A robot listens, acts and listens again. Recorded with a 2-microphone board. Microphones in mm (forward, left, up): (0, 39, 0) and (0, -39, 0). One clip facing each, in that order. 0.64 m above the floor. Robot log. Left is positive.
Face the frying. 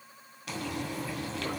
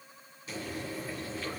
cmd yaw +90
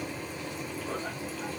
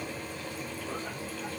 note: So it is at 10° left.
cmd yaw +10
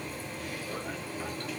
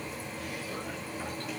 end: Found it: frying, straight ahead, 2 to 4 m away.